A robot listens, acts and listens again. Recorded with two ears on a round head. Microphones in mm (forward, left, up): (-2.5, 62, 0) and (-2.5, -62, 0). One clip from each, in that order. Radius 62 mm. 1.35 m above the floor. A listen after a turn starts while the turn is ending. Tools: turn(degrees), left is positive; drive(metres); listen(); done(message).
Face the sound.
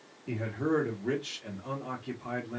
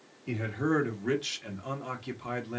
turn(degrees=-90)
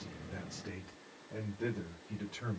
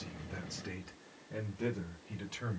turn(degrees=-70)
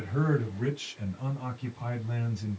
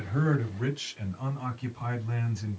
turn(degrees=-35)
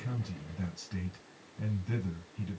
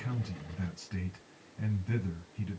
done("Found it: a man speaking, straight ahead, 1 to 2 m away.")